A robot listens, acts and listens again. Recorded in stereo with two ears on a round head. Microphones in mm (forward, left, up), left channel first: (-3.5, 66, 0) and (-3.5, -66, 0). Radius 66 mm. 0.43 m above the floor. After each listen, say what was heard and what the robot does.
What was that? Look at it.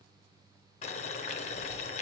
The boiling: about 45° left or 135° left. Turn 45° left.
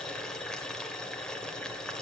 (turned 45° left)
Found it: boiling, straight ahead.